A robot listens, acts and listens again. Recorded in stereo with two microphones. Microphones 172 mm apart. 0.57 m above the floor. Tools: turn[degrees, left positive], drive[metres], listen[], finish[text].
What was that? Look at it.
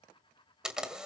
Action: turn[-30]
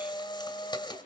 Thought: So it is at 25° left.
Action: turn[25]
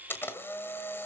Thought: The camera shutter is now 15° left.
Action: turn[15]
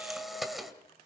Action: finish[Facing the camera shutter.]